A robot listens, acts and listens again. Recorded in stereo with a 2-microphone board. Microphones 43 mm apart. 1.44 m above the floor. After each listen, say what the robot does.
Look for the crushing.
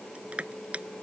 Turn 30° right.
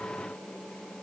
Keep listening.
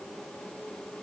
Keep listening.
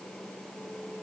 I heard crushing, but can't make it out now. It was about straight ahead or 120° right.